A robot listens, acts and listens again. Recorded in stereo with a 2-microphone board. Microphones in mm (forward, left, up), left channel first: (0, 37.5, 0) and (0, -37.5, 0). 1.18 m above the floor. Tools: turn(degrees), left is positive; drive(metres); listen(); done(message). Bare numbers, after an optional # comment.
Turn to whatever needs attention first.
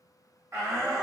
# The shout: about 45° right or 135° right.
turn(-45)
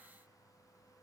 listen()
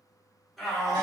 done("Facing the shout, 1 to 2 m away.")